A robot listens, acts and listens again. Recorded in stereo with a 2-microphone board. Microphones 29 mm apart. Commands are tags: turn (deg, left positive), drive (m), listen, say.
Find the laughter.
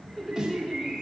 <turn deg="30"/>
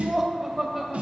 <turn deg="-10"/>
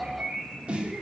<say>Found it: laughter, straight ahead.</say>